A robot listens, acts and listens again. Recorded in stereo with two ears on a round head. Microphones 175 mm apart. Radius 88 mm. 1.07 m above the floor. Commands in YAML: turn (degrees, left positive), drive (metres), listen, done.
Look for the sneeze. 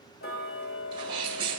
turn: -25
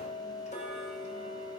listen: true
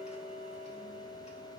done: "I heard a sneeze, but can't make it out now. It was about straight ahead or 130° right."